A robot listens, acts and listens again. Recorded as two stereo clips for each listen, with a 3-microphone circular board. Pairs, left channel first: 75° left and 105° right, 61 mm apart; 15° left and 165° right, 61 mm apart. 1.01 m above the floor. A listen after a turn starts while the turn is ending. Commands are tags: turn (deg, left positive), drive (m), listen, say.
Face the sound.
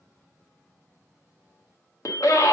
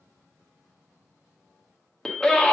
<turn deg="95"/>
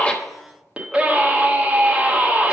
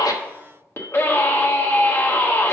<turn deg="-35"/>
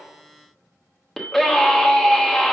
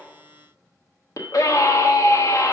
<turn deg="-10"/>
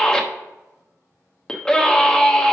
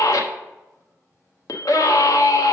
<say>Facing the scream.</say>